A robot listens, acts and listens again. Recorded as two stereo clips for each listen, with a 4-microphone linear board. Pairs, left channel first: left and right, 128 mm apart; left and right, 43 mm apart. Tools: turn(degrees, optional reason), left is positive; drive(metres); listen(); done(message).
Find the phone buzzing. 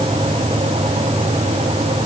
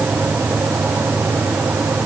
listen()
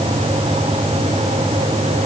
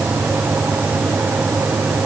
listen()
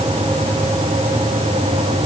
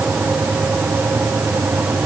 done("I can't make out a phone buzzing to turn to.")